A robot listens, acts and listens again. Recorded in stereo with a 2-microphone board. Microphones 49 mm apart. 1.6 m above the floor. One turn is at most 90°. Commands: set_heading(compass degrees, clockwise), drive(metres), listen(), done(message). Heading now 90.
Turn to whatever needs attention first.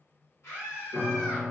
set_heading(25)
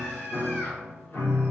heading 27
listen()
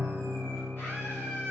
set_heading(337)
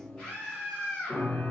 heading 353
set_heading(338)
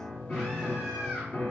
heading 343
listen()
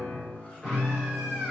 listen()
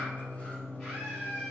done("Found it: a scream, straight ahead.")